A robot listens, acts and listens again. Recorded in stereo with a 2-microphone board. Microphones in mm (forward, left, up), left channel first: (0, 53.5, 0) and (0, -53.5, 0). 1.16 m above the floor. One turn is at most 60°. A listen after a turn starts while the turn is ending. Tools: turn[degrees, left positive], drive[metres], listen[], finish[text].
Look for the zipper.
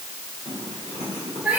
Action: turn[60]
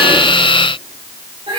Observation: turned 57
Thought: Nothing new. It was at 35° left.
Action: turn[35]
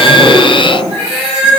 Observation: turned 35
Thought: The zipper is now 10° left.
Action: turn[10]
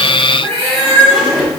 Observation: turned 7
Action: finish[Found it: a zipper, straight ahead.]